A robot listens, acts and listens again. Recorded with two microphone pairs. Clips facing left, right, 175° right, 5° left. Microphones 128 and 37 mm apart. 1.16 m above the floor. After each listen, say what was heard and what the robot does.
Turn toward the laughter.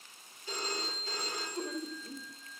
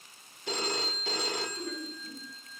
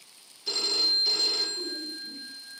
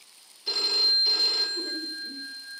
The laughter: 30° left. Turn 30° left.
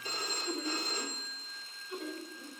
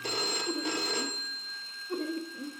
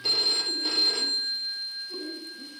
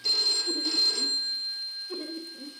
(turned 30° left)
The laughter is now 40° right. Turn 40° right.
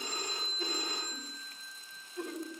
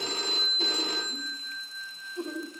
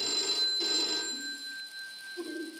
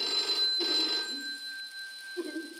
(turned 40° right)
The laughter is now 20° right. Turn 20° right.
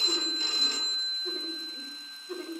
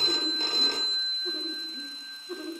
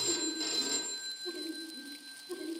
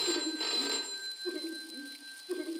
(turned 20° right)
Found it: laughter, straight ahead.